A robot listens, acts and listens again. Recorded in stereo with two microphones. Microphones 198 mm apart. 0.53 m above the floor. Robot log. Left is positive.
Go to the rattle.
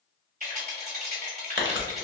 note: The rattle: about 45° right or 135° right.
cmd yaw -45
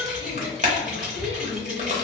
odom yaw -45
cmd idle
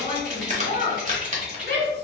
cmd fwd 1.0
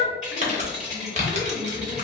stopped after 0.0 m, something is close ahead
end: Blocked. The rattle is further on, straight ahead.